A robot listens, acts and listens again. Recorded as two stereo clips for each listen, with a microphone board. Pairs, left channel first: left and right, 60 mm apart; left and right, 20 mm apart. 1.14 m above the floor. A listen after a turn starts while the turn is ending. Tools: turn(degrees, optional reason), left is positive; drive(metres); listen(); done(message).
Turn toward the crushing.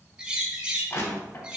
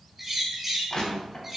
turn(degrees=50, reason="The crushing: about 50° left or 130° left.")
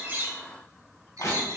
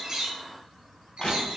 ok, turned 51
turn(degrees=80, reason="So it is at 80° left.")
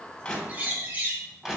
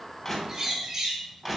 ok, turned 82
done("Facing the crushing.")